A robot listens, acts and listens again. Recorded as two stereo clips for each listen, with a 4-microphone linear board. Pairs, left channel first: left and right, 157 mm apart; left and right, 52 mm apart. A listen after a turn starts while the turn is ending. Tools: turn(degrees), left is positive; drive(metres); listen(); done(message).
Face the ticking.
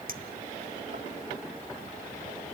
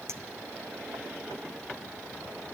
listen()
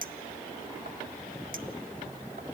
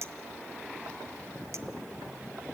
listen()
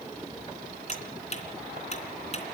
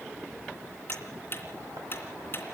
turn(degrees=45)
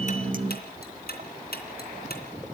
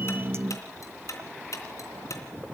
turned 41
turn(degrees=95)
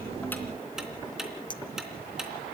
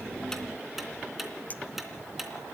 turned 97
listen()
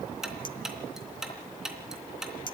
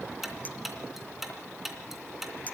done("Facing the ticking, 2 to 4 m away.")